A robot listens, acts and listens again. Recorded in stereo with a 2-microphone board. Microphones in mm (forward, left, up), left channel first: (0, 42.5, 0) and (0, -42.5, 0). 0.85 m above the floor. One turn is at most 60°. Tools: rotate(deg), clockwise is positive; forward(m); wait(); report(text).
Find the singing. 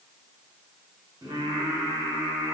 rotate(55)
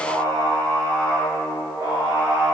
rotate(45)
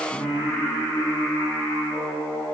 rotate(-10)
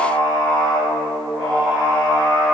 report("Facing the singing.")